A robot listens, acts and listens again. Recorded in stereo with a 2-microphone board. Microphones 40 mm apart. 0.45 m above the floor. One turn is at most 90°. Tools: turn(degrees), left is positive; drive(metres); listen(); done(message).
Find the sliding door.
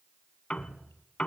listen()
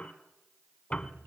listen()
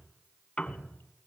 done("I can't make out a sliding door, only dripping and a piano.")